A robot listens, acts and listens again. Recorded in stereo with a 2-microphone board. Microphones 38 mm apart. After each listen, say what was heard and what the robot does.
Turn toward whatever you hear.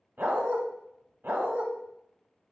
The dog barking: about 60° right or 120° right. Turn 60° right.
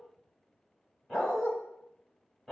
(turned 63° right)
Facing the dog barking, 1 to 2 m away.